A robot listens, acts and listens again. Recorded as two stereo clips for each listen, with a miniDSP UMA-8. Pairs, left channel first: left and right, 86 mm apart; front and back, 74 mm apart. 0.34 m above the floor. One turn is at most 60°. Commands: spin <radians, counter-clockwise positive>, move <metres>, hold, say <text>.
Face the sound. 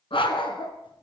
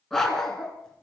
spin 1.05
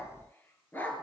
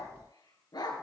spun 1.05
spin 0.35
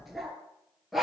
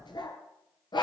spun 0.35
say Facing the dog barking.